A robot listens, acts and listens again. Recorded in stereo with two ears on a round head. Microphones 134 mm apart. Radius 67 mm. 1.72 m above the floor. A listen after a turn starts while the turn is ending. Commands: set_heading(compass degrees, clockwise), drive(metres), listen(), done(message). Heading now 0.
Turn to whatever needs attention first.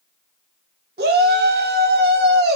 set_heading(75)
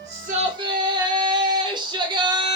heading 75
set_heading(105)
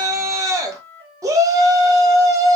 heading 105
set_heading(125)
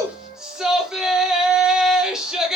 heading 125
done("Found it: a shout, straight ahead, 1 to 2 m away.")